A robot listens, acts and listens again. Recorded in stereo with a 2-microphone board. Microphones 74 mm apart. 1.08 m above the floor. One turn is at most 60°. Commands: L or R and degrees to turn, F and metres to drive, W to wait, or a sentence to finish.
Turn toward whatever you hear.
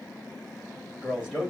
R30
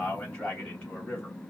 L15
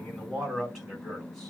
Found it: a man speaking, straight ahead.